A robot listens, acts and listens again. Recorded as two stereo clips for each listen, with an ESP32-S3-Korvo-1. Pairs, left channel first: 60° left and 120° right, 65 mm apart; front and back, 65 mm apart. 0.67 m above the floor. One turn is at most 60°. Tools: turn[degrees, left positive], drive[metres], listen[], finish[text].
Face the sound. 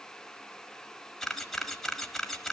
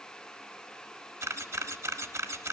Thought: The camera shutter: 145° left.
Action: turn[60]
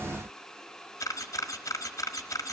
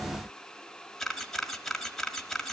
Thought: The camera shutter is now 85° left.
Action: turn[60]
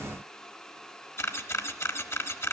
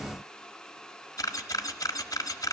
Thought: The camera shutter is now 20° left.
Action: turn[20]
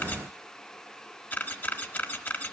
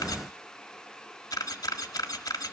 Action: finish[Found it: a camera shutter, straight ahead.]